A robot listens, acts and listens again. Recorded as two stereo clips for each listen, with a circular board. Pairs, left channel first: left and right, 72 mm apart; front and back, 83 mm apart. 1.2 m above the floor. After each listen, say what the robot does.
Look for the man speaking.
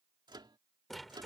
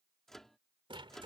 Keep listening.
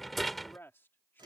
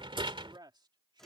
Turn 150° left.
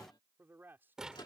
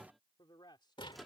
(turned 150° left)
Turn 30° right.
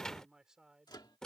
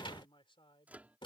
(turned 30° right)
Facing the man speaking.